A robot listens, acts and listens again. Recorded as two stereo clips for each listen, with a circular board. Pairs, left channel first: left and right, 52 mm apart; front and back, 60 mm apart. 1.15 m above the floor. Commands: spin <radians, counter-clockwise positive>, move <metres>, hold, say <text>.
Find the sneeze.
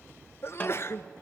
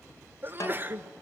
spin 2.18
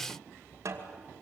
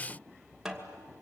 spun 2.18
say I heard a sneeze from this way, but can't make it out now.